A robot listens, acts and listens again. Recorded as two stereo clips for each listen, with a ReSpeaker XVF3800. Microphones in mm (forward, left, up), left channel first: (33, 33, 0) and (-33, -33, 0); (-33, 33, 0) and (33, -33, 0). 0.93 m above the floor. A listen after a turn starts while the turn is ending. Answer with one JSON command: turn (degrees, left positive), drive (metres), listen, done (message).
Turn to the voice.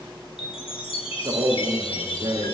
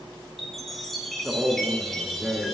{"turn": -120}
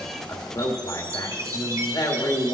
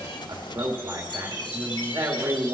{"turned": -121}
{"done": "Facing the man speaking."}